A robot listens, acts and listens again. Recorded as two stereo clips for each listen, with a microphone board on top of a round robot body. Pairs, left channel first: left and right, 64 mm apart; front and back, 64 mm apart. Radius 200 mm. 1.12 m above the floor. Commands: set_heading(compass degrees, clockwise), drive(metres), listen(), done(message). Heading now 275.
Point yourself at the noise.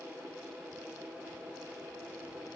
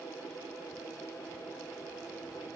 listen()
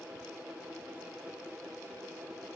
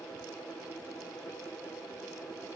listen()
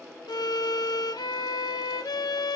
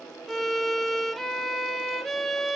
set_heading(185)
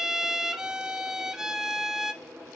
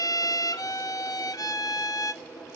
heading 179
set_heading(189)
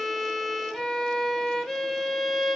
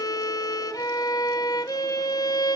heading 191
done("Facing the violin, under 1 m away.")